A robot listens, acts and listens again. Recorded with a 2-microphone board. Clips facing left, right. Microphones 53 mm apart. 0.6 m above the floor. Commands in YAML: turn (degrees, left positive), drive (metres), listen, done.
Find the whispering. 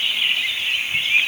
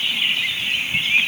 listen: true
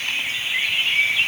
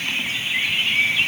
listen: true
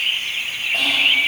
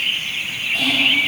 turn: 55
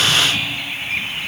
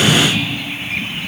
listen: true
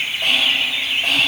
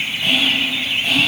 turn: 65
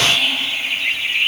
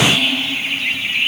turn: -10
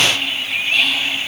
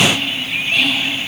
done: "Facing the whispering, 2 to 4 m away."